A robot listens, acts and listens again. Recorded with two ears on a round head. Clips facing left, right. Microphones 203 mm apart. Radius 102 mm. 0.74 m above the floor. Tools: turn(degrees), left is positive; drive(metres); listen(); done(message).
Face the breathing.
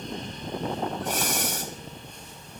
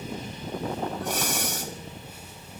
turn(degrees=50)
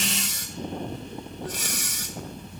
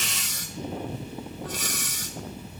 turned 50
turn(degrees=80)
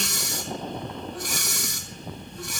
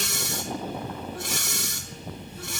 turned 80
turn(degrees=-20)
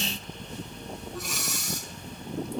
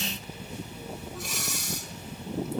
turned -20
done("Facing the breathing, 2 to 4 m away.")